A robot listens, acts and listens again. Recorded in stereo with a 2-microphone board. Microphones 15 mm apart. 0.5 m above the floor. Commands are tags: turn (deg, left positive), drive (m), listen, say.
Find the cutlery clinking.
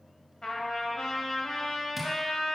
<listen/>
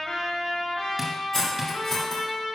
<turn deg="30"/>
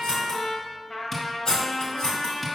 <turn deg="115"/>
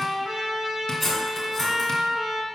<turn deg="15"/>
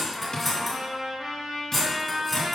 <say>Found it: cutlery clinking, straight ahead.</say>